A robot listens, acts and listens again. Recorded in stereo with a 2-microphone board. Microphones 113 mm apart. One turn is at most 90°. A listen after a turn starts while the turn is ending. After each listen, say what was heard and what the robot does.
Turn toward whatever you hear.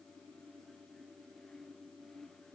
Keep listening.
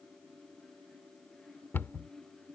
The cupboard door: about 20° left or 160° left. Turn 20° left.
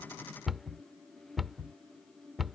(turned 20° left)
Found it: a cupboard door, straight ahead.